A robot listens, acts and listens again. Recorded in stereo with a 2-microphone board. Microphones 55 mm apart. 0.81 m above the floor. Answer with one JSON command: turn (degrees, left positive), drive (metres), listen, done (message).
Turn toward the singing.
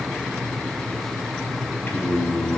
{"turn": 50}
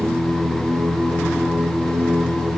{"done": "Facing the singing, 2 to 4 m away."}